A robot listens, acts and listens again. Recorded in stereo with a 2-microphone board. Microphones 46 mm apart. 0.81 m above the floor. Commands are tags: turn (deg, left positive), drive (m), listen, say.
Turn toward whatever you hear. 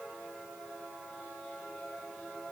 <listen/>
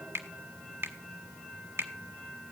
<turn deg="-65"/>
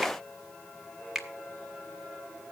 <say>Facing the finger snap.</say>